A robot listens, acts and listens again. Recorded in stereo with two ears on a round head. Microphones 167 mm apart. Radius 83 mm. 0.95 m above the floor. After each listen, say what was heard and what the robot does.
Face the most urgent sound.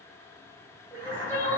Turn 30° left.
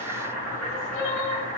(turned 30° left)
So it is at 145° left. Turn 145° left.
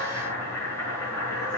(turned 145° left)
Keep listening.
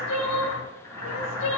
The crying is now 45° left. Turn 45° left.
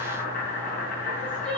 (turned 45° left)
The crying is now 10° left. Turn 10° left.
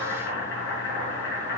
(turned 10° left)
Keep listening.
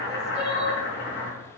Facing the crying, 2 to 4 m away.